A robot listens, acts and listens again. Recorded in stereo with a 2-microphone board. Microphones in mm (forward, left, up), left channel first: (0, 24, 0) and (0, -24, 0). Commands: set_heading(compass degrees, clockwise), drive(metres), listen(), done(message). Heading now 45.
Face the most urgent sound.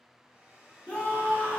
set_heading(25)
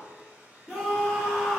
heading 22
done("Facing the scream, 1 to 2 m away.")